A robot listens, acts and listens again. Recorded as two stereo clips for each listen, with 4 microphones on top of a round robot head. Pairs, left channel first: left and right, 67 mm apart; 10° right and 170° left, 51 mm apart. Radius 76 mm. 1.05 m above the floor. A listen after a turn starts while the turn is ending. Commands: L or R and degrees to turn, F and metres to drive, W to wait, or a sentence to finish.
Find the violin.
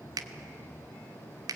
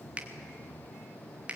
W
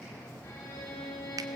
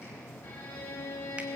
L30
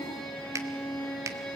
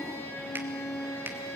L15
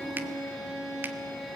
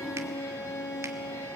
Facing the violin, over 4 m away.